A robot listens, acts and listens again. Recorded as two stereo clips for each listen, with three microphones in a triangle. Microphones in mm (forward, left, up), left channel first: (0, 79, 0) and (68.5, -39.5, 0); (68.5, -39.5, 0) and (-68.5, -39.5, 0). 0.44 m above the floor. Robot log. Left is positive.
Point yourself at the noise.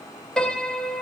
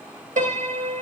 note: The piano: 155° right.
cmd yaw -155
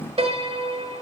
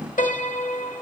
note: The piano is now 15° right.
cmd yaw -15
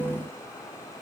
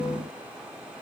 cmd idle
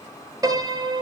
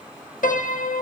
end: Facing the piano.